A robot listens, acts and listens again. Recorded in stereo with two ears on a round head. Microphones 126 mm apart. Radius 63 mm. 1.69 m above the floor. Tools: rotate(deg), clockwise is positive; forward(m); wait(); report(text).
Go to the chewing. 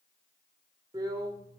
wait()
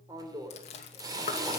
rotate(-45)
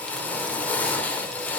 wait()
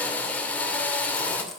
wait()
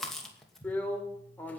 forward(1.0)
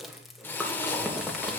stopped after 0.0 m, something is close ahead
report("Something is in my way. I am facing the chewing but have not reached it.")